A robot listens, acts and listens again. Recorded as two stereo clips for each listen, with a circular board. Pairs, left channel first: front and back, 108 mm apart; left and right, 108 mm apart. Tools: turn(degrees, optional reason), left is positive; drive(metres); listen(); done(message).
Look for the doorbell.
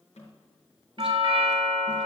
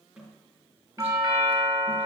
turn(degrees=-140, reason="The doorbell: 140° right.")
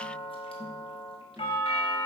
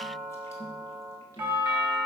turn(degrees=-20, reason="The doorbell is now 20° right.")
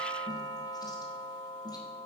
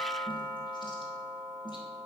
done("Facing the doorbell, 2 to 4 m away.")